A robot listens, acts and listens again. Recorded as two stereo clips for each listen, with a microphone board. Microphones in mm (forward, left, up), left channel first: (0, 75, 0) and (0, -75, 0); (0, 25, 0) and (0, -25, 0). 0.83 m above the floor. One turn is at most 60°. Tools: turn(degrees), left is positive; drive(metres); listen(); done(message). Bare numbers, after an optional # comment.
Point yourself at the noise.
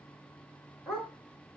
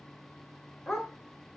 turn(30)
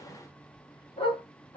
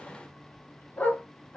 # So it is at 145° left.
turn(60)
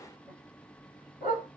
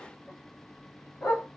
# The dog barking is now 65° left.
turn(60)
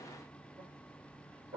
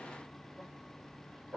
# The dog barking is now 10° right.
turn(-10)
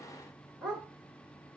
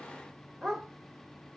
done("Facing the dog barking, over 4 m away.")